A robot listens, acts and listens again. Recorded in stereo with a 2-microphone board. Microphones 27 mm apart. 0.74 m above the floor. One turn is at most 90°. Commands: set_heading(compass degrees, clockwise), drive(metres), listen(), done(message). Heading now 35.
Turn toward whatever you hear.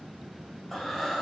set_heading(5)
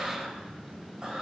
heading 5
set_heading(30)
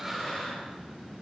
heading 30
done("Facing the breathing.")